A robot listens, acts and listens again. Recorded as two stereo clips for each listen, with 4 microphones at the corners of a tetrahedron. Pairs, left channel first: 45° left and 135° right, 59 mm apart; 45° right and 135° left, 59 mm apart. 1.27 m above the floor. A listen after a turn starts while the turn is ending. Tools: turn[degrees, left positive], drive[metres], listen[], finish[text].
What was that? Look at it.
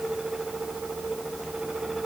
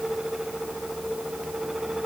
Action: listen[]
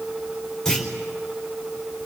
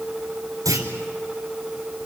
Thought: The clunk: 125° left.
Action: turn[125]
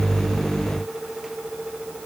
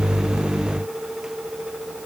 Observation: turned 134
Thought: Nothing new. It was at 10° right.
Action: turn[-10]
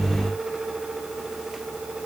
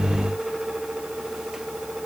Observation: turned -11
Action: finish[I heard a clunk from this way, but can't make it out now.]